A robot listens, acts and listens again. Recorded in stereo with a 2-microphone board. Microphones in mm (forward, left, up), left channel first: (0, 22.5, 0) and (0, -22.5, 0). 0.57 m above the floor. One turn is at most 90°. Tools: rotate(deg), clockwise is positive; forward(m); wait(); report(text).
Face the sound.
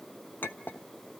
rotate(-50)
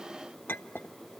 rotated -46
rotate(-70)
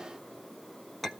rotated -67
report("Found it: a clink, straight ahead.")